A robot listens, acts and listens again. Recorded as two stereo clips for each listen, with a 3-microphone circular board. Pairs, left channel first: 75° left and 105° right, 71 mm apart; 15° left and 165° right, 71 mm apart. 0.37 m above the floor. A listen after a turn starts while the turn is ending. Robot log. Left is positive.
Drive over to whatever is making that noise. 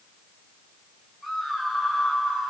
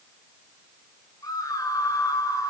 note: The scream: 15° right.
cmd yaw -15
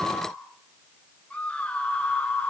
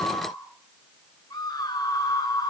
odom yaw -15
cmd fwd 1.0
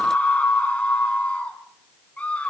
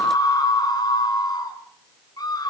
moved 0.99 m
cmd fwd 1.0
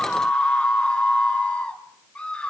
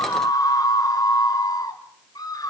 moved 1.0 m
cmd fwd 1.0
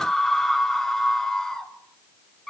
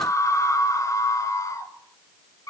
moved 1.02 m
cmd fwd 1.0
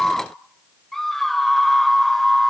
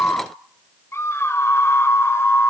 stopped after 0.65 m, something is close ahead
note: The scream is now 10° right.
cmd yaw -10
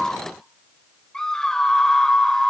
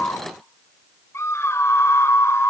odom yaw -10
end: Arrived at the scream, straight ahead.